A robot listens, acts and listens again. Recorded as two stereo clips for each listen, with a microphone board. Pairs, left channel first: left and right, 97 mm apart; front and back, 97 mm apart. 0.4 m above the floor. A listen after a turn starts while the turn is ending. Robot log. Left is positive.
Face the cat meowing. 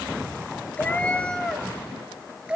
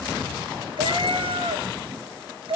note: The cat meowing: 165° right.
cmd yaw -165
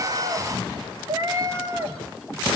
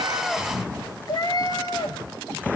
note: The cat meowing is now 30° right.
cmd yaw -30
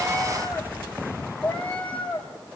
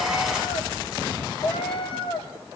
note: The cat meowing is now 15° left.
cmd yaw +15
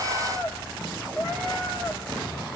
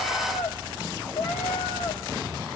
end: Facing the cat meowing, 2 to 4 m away.